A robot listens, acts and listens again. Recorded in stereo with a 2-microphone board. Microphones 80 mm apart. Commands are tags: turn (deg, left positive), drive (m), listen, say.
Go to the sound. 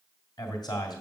<turn deg="60"/>
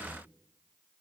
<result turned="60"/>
<turn deg="25"/>
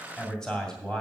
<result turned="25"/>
<turn deg="10"/>
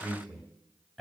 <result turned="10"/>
<drive m="1.0"/>
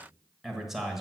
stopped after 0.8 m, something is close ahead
<say>I am next to the man speaking.</say>